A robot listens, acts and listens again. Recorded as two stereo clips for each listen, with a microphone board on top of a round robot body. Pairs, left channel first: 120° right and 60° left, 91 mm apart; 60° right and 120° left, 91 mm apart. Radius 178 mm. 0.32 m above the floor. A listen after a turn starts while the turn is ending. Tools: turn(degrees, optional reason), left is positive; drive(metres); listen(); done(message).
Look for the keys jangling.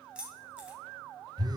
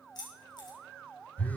turn(degrees=-20, reason="The keys jangling: 20° right.")
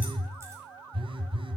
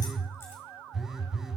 listen()
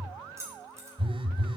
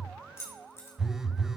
done("Found it: keys jangling, straight ahead, 2 to 4 m away.")